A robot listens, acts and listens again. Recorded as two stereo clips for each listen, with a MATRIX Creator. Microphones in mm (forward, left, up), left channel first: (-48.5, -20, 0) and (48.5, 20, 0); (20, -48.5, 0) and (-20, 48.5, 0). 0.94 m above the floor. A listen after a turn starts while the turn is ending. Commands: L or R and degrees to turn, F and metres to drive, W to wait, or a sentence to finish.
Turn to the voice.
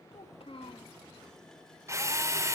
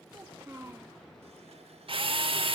L175
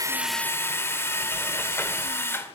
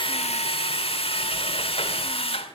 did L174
W
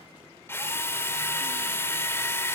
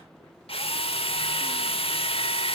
W
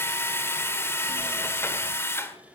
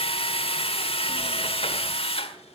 Facing where the child speaking came from. I can't hear it now.